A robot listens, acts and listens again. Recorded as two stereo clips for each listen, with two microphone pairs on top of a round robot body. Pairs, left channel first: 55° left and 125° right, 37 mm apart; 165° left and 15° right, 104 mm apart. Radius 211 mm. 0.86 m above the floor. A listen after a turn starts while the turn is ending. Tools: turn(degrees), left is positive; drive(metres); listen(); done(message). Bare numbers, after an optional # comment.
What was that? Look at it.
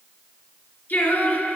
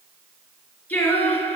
# The singing: 90° left.
turn(90)
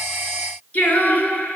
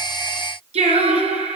# The singing is now 10° left.
turn(10)
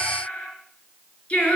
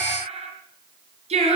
done("Facing the singing, 2 to 4 m away.")